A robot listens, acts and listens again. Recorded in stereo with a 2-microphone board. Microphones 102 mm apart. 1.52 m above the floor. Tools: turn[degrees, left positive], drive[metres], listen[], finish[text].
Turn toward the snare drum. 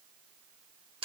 Action: listen[]
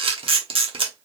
Action: listen[]
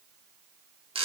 Action: finish[I can't make out a snare drum to turn to.]